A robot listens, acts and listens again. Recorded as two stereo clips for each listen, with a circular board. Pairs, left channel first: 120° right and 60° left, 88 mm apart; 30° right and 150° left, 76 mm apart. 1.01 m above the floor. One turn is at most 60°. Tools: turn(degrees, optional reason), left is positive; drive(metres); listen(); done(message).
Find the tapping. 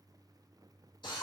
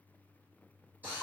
listen()
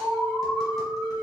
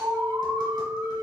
listen()
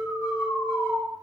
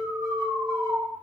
done("I can't make out tapping to turn to.")